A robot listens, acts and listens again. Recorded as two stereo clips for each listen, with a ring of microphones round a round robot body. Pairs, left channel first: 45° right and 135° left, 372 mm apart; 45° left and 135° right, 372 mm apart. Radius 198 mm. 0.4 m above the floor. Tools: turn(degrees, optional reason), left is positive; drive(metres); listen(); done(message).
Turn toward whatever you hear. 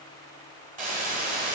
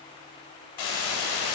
turn(degrees=65, reason="The hiss: 65° left.")
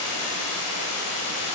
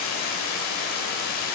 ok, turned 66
done("Found it: a hiss, straight ahead.")